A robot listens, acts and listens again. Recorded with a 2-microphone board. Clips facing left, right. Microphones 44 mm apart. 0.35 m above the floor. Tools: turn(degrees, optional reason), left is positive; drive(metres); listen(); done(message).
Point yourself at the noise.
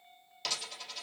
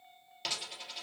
turn(degrees=-30)
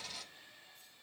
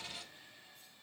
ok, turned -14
turn(degrees=-155, reason="So it is at 155° right.")
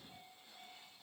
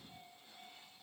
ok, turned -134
turn(degrees=-20, reason="Nothing new. It was at 20° right.")
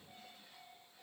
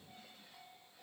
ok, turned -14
done("Facing where the dropped coin came from. I can't hear it now.")